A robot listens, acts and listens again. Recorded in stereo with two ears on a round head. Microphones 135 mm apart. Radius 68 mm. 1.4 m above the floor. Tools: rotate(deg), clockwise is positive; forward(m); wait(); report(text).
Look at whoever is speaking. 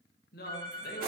rotate(-65)
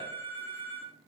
wait()
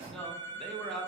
report("Facing the man speaking.")